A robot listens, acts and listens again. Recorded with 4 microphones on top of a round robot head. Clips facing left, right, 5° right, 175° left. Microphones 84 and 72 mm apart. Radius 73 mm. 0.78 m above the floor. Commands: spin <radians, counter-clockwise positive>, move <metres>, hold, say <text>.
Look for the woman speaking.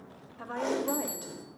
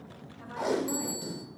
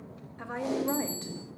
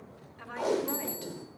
spin 1.05
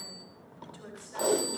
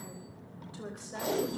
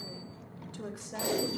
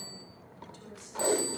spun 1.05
spin -0.44
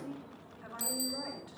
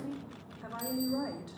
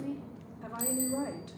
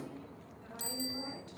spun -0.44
spin -0.35
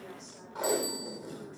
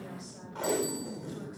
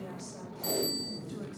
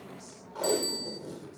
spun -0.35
hold
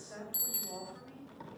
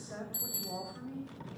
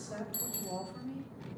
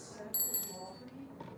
spin -0.17
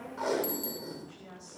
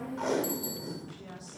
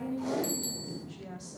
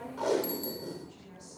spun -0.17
say Facing the woman speaking.